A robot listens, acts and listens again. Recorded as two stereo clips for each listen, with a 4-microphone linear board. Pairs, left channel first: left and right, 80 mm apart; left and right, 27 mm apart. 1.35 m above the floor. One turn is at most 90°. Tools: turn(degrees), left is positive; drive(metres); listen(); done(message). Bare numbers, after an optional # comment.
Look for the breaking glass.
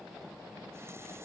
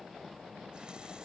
listen()
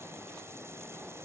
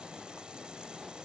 listen()
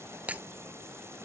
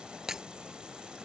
# The breaking glass: about 20° right or 160° right.
turn(-20)
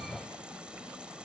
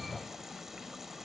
listen()
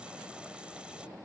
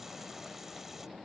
done("I heard breaking glass, but can't make it out now. It was about straight ahead or 140° right.")